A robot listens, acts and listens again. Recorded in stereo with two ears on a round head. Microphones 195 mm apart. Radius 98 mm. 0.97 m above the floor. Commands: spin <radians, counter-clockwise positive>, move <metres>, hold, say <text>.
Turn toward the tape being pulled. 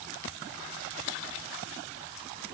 hold
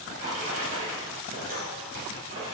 hold
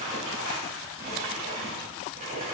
say I can't make out tape being pulled to turn to.